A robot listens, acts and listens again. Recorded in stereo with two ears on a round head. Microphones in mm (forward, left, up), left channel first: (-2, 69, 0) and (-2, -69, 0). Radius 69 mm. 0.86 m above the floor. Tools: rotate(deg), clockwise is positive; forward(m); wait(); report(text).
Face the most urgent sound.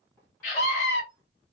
rotate(-50)
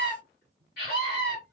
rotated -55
rotate(-70)
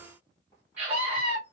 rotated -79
rotate(10)
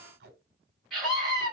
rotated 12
report("Facing the scream.")